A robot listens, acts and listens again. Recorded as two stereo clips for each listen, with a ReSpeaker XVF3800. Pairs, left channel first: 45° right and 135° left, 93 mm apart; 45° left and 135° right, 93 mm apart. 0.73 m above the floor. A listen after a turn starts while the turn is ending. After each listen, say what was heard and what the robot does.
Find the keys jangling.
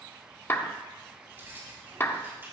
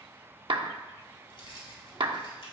The keys jangling: 70° left. Turn 70° left.
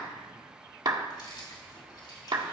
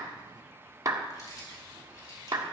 Facing the keys jangling.